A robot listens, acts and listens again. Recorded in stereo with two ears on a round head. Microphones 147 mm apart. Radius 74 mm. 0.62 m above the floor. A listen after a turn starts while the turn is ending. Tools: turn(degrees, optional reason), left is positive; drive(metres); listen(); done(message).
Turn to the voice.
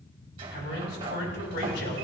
turn(degrees=70, reason="The man speaking: about 70° left or 110° left.")
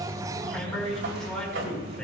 done("Facing the man speaking.")